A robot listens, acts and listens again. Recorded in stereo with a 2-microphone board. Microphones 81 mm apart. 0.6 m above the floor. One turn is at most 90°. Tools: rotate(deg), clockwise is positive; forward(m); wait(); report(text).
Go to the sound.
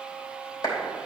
rotate(-50)
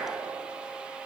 wait()
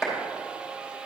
forward(1.0)
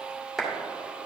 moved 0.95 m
forward(1.0)
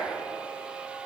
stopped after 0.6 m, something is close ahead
wait()
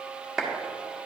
rotate(10)
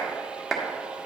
report("Arrived at the clap, straight ahead.")